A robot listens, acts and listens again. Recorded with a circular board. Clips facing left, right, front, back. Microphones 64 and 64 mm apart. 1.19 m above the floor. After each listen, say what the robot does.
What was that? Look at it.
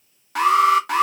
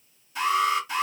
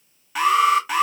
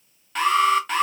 Turn 85° left.
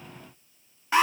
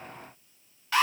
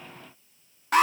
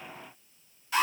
Turn 20° left.
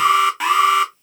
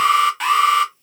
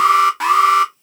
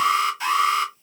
Found it: an alarm, straight ahead, under 1 m away.